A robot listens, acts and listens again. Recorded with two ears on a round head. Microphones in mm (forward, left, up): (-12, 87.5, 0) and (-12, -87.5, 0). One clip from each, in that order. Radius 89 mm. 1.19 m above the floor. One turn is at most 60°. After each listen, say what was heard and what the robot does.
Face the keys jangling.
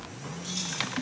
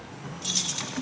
The keys jangling: about 50° right or 130° right. Turn 50° right.
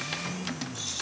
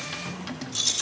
So it is at 60° right. Turn 60° right.
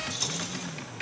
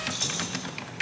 Found it: keys jangling, straight ahead, 2 to 4 m away.